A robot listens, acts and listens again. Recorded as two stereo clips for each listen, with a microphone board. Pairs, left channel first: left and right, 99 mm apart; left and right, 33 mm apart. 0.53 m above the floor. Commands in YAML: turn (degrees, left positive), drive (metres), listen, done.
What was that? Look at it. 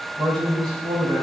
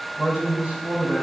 turn: -50
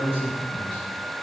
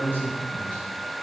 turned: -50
turn: -80
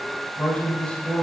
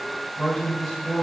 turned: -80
turn: 10
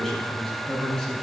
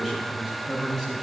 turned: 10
done: "Facing the man speaking."